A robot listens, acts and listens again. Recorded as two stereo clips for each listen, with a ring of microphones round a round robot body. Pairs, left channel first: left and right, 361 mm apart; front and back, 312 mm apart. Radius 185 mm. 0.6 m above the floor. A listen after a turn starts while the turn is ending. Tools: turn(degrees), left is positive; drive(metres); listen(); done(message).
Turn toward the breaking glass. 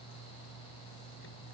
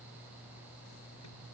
listen()
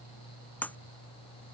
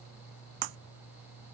turn(degrees=175)
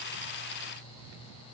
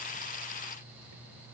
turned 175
done("I heard breaking glass from this way, but can't make it out now.")